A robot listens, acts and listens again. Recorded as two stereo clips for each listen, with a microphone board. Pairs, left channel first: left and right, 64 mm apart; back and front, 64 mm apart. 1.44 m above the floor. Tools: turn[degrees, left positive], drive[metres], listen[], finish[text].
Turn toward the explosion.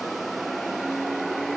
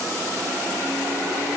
Action: listen[]
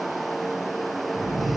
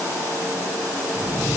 Thought: The explosion: 70° right.
Action: turn[-70]
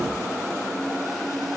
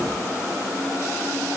Action: finish[Facing where the explosion came from. I can't hear it now.]